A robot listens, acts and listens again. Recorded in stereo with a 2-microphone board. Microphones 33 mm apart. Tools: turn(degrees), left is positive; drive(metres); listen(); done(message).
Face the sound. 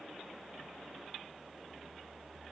listen()
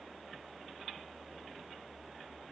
listen()
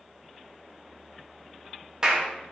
turn(degrees=-30)
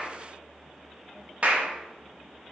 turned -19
turn(degrees=-145)
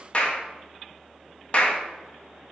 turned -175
turn(degrees=30)
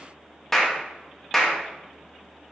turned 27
done("Facing the clap, 1 to 2 m away.")